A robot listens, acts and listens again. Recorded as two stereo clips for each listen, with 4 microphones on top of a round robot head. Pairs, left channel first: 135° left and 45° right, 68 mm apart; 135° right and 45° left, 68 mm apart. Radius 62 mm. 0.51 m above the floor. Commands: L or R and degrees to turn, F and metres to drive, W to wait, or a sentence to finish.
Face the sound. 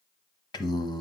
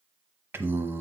L105
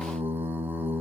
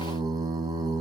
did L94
L15
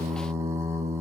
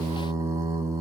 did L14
Facing the singing.